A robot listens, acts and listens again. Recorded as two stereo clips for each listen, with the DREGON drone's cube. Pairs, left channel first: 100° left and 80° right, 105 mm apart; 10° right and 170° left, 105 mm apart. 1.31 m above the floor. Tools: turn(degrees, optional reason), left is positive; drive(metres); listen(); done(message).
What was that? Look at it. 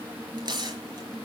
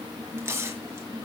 turn(degrees=-125, reason="The tearing paper: 125° right.")
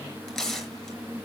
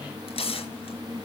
turn(degrees=15, reason="The tearing paper is now 15° left.")
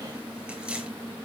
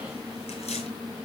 listen()
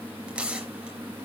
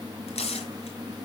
done("Facing the tearing paper, over 4 m away.")